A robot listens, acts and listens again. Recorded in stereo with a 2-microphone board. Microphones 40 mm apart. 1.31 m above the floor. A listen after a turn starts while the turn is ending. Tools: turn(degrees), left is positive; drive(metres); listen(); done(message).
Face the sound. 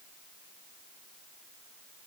listen()
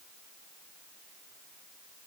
listen()
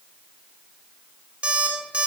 turn(degrees=-30)
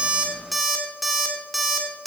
done("Found it: an alarm clock, straight ahead.")